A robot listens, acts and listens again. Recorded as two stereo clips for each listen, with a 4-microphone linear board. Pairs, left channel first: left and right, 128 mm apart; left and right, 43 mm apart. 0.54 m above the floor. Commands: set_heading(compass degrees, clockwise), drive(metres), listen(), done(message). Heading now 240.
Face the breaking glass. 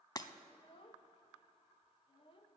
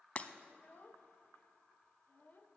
set_heading(210)
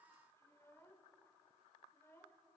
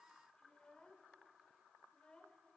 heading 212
listen()
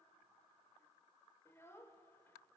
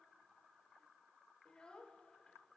done("I heard breaking glass, but can't make it out now. It was about 5° left or 120° left.")